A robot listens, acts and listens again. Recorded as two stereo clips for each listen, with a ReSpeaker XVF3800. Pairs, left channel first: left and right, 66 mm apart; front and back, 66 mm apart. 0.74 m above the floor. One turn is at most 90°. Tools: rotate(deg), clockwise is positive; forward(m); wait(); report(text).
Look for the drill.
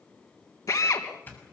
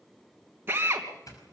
rotate(-90)
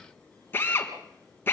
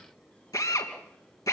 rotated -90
rotate(-30)
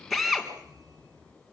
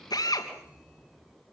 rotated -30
report("Facing the drill.")